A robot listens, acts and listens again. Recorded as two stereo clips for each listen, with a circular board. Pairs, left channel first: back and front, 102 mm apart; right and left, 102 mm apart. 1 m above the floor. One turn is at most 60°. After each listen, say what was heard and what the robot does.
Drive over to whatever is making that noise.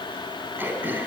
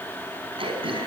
The throat clearing: 70° left. Turn 60° left.
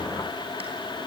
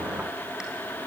Nothing new. It was at 10° left. Turn 10° left.
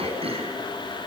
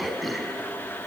Drive 1.0 m forward.
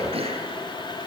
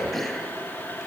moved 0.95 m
Drive 1.0 m forward.
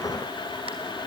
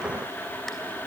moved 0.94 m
Keep listening.
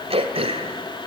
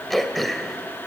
Drive 1.0 m forward.
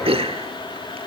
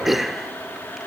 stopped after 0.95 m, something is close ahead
Arrived at the throat clearing, straight ahead.